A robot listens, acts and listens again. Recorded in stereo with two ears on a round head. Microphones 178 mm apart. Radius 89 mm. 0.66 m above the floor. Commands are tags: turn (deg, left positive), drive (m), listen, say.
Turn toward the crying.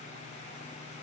<listen/>
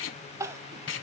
<turn deg="-15"/>
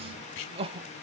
<turn deg="-150"/>
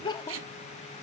<turn deg="25"/>
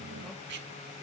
<listen/>
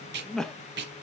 <say>Facing the crying, under 1 m away.</say>